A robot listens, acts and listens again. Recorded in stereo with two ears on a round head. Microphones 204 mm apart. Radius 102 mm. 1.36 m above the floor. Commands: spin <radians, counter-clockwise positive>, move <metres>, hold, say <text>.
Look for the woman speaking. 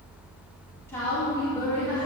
spin 0.52
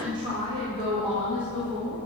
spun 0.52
spin -0.35
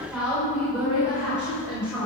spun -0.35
say Facing the woman speaking.